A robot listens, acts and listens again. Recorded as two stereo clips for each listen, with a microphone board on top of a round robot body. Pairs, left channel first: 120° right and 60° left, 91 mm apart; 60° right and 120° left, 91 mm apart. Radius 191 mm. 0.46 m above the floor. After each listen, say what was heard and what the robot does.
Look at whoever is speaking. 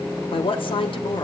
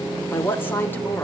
The woman speaking: 125° right. Turn 125° right.
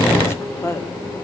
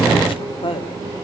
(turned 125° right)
The woman speaking is now 60° right. Turn 60° right.
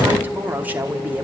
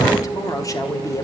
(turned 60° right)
The woman speaking is now 10° right. Turn 10° right.
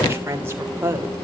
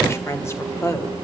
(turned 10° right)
Found it: a woman speaking, straight ahead, 2 to 4 m away.